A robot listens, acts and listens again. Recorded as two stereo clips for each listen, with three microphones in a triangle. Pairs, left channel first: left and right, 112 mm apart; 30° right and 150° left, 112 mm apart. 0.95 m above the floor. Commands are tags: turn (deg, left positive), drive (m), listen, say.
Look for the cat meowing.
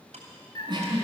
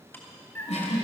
<turn deg="40"/>
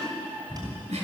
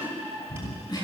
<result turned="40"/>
<turn deg="-20"/>
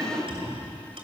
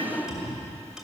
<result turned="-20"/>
<turn deg="-15"/>
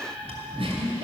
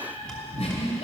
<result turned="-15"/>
<turn deg="-15"/>
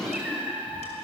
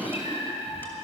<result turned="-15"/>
<turn deg="-10"/>
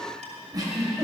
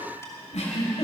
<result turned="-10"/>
<listen/>
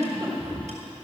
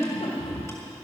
<turn deg="-10"/>
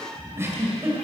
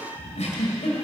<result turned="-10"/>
<say>Facing the cat meowing.</say>